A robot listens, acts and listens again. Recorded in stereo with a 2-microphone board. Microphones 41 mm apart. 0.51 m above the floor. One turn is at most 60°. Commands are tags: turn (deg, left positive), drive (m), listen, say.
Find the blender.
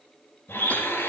<turn deg="60"/>
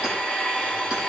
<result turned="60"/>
<turn deg="15"/>
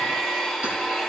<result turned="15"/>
<say>Found it: a blender, straight ahead, over 4 m away.</say>